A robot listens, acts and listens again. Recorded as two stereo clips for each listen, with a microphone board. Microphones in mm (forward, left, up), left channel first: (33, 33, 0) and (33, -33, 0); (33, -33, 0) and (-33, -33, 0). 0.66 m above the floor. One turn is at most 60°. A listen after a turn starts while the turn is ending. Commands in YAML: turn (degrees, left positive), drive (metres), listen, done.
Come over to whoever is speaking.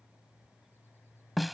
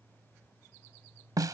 listen: true
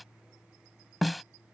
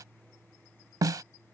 listen: true
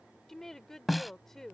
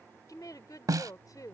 drive: 1.0
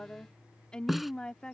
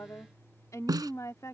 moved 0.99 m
turn: 15
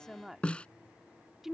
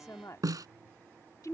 drive: 1.0
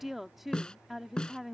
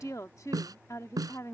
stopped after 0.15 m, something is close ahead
done: "Arrived at the woman speaking, straight ahead."